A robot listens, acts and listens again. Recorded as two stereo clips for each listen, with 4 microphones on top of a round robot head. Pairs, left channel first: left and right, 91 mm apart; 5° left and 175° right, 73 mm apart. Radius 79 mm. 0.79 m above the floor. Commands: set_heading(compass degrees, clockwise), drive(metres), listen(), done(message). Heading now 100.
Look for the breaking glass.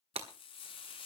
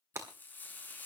set_heading(215)
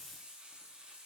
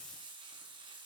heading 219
done("Facing where the breaking glass came from. I can't hear it now.")